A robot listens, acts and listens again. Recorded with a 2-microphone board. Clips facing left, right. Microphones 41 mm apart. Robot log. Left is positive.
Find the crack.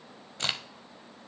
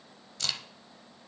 note: The crack: about 30° left or 150° left.
cmd yaw +30
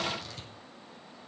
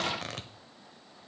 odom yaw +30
cmd idle
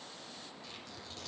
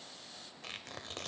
end: I heard a crack, but can't make it out now. It was about straight ahead or 120° left.